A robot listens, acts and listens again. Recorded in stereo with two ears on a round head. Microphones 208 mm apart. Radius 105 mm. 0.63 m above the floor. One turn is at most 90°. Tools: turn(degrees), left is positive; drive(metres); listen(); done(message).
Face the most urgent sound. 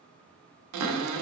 listen()
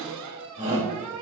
turn(degrees=-30)
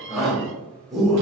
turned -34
done("Found it: a shout, straight ahead.")